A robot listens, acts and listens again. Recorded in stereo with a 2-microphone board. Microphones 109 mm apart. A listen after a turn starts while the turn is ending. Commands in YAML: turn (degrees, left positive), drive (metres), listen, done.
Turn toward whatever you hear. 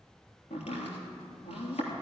turn: 90
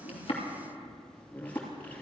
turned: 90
turn: 15
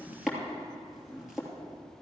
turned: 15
done: "Facing the chopping, 2 to 4 m away."